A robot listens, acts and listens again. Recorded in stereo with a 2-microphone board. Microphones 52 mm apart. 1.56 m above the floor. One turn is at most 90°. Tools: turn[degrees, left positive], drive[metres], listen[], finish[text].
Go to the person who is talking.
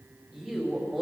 Action: turn[-30]
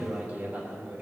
Thought: So it is at 140° right.
Action: turn[-90]
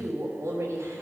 Thought: The woman speaking is now 70° right.
Action: turn[-70]
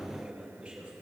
Thought: The woman speaking is now 20° right.
Action: turn[-20]
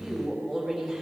Action: drive[1.0]
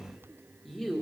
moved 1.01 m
Action: drive[1.0]
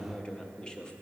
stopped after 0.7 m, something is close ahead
Thought: The woman speaking is now 15° left.
Action: turn[15]
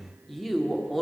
Action: finish[Arrived at the woman speaking, straight ahead.]